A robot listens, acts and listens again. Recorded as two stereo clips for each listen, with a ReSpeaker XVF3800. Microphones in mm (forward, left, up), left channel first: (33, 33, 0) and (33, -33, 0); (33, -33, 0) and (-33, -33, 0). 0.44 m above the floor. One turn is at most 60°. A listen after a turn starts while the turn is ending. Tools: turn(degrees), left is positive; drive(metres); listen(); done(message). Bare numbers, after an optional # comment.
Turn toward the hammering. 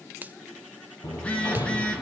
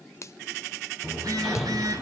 # The hammering: 90° left.
turn(60)
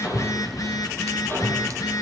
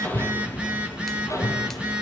# The hammering is now 40° left.
turn(40)
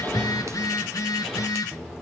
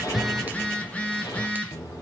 done("Facing the hammering.")